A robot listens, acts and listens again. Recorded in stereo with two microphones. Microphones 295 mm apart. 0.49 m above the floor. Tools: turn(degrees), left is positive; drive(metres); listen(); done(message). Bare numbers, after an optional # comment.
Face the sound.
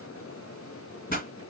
# The pop: about 30° left or 150° left.
turn(30)
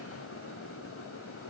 listen()
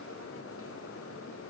done("I heard a pop, but can't make it out now. It was about straight ahead or 120° left.")